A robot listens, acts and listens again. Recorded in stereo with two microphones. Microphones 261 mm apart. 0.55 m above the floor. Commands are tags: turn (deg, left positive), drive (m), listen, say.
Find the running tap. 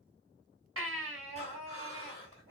<listen/>
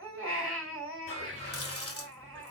<turn deg="65"/>
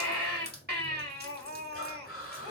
<turn deg="40"/>
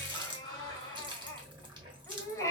<turn deg="-20"/>
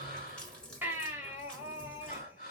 <say>Facing the running tap, 1 to 2 m away.</say>